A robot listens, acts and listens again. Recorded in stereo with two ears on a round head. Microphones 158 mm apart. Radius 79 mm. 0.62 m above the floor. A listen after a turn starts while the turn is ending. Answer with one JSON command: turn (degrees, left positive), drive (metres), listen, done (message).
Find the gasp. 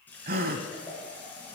{"turn": -55}
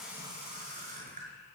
{"listen": true}
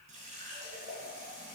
{"done": "I heard a gasp, but can't make it out now. It was about straight ahead or 70° right."}